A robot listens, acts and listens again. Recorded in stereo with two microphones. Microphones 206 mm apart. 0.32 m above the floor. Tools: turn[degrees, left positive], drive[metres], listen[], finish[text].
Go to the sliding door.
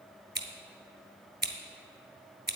Action: listen[]
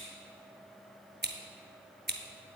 Action: listen[]
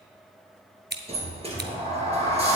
Thought: The sliding door: about 30° right or 150° right.
Action: turn[-30]
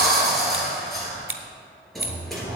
Action: drive[1.0]
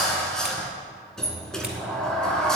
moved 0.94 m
Action: drive[1.0]
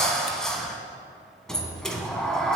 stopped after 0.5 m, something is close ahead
Action: finish[Arrived at the sliding door, straight ahead.]